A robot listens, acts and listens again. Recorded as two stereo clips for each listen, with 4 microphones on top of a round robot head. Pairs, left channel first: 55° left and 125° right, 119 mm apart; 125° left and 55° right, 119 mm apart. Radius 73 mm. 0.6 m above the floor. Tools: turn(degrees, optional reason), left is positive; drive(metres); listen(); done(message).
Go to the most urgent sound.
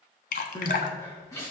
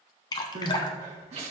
turn(degrees=-15, reason="The crying: 15° right.")
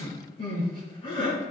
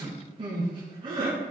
drive(metres=1.0)
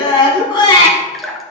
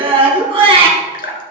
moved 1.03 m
drive(metres=1.0)
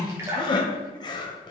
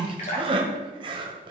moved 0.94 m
drive(metres=1.0)
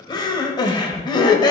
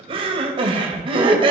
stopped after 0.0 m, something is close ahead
done("Arrived at the crying, straight ahead.")